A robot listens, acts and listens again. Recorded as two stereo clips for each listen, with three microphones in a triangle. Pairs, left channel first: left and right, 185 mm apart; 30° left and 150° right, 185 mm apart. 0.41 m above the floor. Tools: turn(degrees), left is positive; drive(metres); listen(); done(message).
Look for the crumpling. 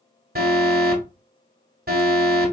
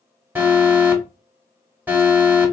listen()
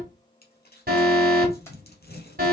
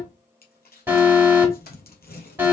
turn(degrees=60)
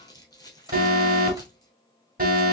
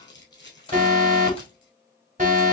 turn(degrees=20)
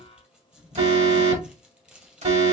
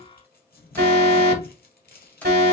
done("Facing the crumpling.")